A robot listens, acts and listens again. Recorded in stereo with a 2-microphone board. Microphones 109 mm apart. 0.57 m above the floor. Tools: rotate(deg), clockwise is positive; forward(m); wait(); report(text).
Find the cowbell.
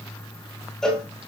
rotate(-30)
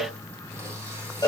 rotate(-145)
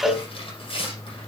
report("Facing the cowbell.")